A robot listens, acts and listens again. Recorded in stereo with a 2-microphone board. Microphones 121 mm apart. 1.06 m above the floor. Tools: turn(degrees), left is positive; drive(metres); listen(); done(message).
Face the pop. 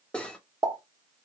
turn(degrees=-35)
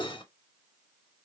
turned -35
listen()
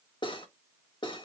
done("I heard a pop, but can't make it out now. It was about straight ahead or 110° right.")